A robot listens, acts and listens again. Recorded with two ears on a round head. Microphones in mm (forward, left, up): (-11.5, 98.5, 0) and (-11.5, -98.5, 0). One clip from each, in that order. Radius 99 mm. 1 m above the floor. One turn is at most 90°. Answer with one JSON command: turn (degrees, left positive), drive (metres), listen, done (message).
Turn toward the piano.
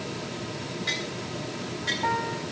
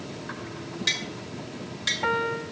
{"turn": -65}
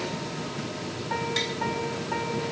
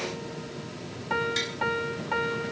{"turn": -45}
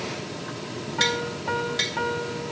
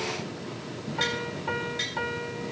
{"done": "Facing the piano, 1 to 2 m away."}